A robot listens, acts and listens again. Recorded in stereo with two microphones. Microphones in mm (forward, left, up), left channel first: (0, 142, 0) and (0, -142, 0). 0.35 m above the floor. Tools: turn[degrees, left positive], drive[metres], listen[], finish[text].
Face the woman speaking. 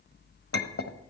Action: listen[]
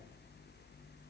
Action: listen[]
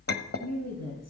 Thought: The woman speaking: about 60° left or 120° left.
Action: turn[60]
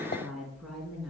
Action: finish[Facing the woman speaking, 2 to 4 m away.]